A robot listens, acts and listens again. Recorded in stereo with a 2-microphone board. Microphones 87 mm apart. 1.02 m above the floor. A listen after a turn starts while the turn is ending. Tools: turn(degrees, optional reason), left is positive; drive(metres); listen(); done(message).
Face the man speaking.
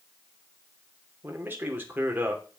turn(degrees=-20, reason="The man speaking: about 20° right or 160° right.")
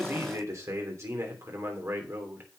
turn(degrees=-25, reason="The man speaking: about 25° right or 155° right.")
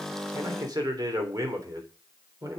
turn(degrees=-140, reason="So it is at 140° right.")
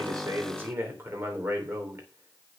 turn(degrees=-25, reason="The man speaking is now 25° right.")
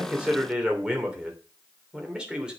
turn(degrees=-10, reason="The man speaking is now 10° right.")
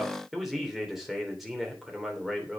done("Found it: a man speaking, straight ahead.")